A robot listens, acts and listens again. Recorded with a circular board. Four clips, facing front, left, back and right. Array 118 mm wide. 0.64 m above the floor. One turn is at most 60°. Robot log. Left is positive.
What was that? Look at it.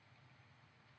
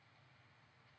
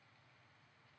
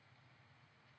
cmd idle
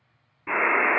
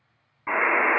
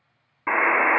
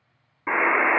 note: The buzzer: 170° right.
cmd yaw -60
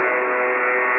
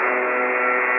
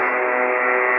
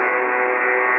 note: The buzzer is now 130° right.
cmd yaw -60
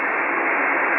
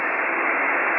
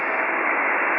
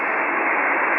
note: The buzzer is now 75° right.
cmd yaw -60
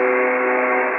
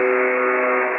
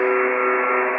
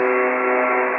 note: The buzzer is now 30° right.
cmd yaw -30
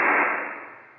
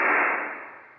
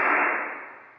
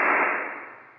note: The buzzer is now 15° right.
cmd yaw -15
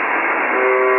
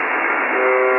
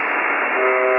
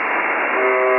end: Found it: a buzzer, straight ahead, under 1 m away.